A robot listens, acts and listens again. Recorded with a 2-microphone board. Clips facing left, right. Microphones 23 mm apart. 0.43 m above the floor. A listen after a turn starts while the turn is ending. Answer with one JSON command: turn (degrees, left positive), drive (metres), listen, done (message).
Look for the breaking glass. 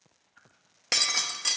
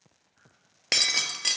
{"turn": -30}
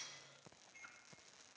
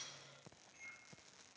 {"listen": true}
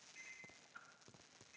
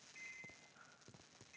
{"done": "I heard breaking glass, but can't make it out now. It was about 15° left or 135° right."}